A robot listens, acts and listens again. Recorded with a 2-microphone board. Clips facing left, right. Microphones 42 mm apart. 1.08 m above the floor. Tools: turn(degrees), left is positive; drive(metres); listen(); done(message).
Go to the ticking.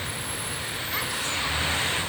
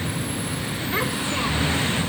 listen()
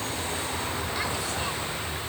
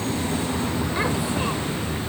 listen()
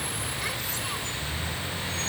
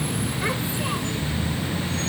done("I can't make out ticking.")